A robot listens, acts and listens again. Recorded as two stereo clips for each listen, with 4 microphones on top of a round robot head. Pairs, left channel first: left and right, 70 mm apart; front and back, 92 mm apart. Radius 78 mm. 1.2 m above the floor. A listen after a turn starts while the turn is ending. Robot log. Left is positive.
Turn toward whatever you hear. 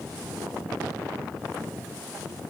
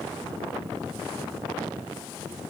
cmd idle
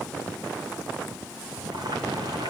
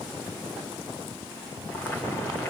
note: The boiling: 75° right.
cmd yaw -75
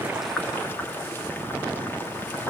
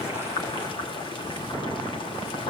note: The boiling is now 30° left.
cmd yaw +30
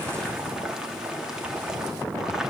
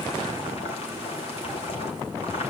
note: The boiling is now 10° right.
cmd yaw -10
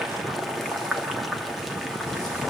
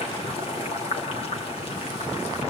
end: Facing the boiling.